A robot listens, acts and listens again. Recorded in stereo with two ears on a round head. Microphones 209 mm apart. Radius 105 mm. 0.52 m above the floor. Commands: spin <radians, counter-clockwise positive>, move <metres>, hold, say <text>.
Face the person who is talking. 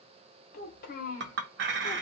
spin 0.61
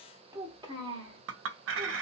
spin -0.44
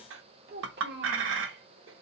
spin -0.79
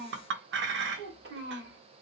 spin -0.87
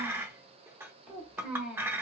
say Found it: a child speaking, straight ahead.